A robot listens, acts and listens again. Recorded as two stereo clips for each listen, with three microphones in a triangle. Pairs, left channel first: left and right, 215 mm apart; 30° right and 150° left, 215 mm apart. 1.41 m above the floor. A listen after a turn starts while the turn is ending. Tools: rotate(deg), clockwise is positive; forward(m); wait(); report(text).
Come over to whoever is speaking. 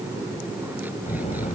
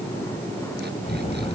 rotate(-30)
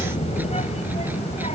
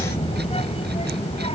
rotate(-30)
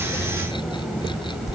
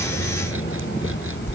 forward(1.0)
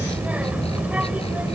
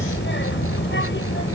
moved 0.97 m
forward(1.0)
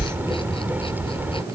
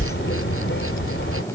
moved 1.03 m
rotate(10)
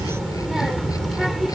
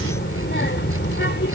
forward(1.0)
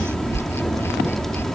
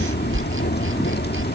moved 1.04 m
forward(1.0)
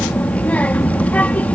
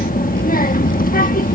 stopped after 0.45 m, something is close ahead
rotate(-10)
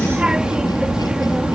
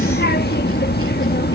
report("I am next to the child speaking.")